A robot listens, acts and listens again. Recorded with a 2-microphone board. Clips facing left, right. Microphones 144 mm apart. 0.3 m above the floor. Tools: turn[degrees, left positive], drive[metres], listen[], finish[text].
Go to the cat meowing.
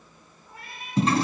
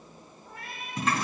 Thought: The cat meowing: about 60° right or 120° right.
Action: turn[-60]
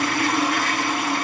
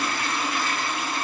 Action: listen[]
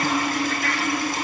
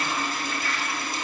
Action: listen[]
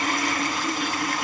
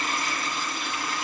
Action: finish[I heard a cat meowing, but can't make it out now. It was about straight ahead or 60° right. I did not reach it.]